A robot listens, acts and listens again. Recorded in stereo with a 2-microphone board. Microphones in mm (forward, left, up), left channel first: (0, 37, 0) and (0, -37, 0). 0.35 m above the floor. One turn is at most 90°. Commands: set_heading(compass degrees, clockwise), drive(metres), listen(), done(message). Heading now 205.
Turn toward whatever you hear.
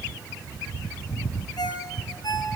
set_heading(140)
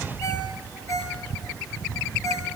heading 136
set_heading(91)
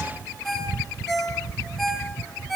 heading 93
done("Found it: a ringtone, straight ahead.")